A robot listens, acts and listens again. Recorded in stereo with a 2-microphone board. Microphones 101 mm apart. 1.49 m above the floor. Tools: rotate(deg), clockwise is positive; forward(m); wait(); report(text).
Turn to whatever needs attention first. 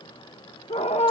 rotate(-90)
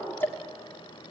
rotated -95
wait()
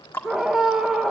report("Facing the scream.")